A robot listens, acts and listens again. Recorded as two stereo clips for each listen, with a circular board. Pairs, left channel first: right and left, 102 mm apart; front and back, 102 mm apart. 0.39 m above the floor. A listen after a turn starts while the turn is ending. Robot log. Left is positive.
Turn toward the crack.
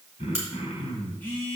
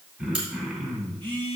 note: The crack: 155° left.
cmd yaw +155
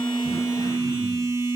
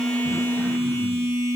end: Facing where the crack came from. I can't hear it now.